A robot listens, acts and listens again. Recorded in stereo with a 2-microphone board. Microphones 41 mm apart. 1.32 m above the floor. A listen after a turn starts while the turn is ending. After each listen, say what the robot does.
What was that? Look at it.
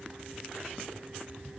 Keep listening.
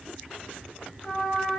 Turn 35° left.
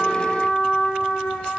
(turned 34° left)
Turn 115° left.
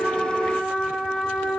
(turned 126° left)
Turn 10° right.
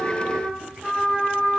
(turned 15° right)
Facing the trumpet, 1 to 2 m away.